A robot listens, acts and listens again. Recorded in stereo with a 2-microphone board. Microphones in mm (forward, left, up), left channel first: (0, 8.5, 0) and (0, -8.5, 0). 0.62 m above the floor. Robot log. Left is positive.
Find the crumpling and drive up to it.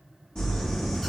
note: The crumpling: about 60° left or 120° left.
cmd yaw +60
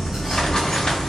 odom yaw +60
note: So it is at 55° left.
cmd yaw +55
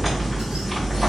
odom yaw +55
cmd fwd 1.0
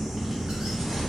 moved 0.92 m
note: The crumpling is now 10° right.
cmd yaw -10
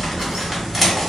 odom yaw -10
cmd fwd 1.0
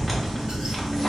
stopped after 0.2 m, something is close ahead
end: I am next to the crumpling.